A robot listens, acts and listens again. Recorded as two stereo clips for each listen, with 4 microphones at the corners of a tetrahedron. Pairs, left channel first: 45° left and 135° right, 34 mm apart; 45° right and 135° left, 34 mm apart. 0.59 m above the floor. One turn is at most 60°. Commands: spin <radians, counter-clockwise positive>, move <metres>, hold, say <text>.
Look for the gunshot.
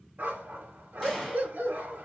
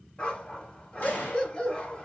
spin -0.70
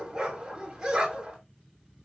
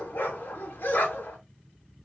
say I heard a gunshot from this way, but can't make it out now.